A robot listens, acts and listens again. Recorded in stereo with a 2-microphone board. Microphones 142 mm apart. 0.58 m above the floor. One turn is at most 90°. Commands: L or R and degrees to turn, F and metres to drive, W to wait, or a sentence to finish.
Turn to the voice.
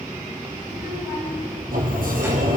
R20
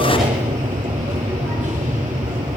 W
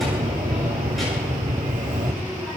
W
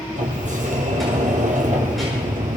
I heard a child speaking, but can't make it out now. It was about straight ahead or 140° right.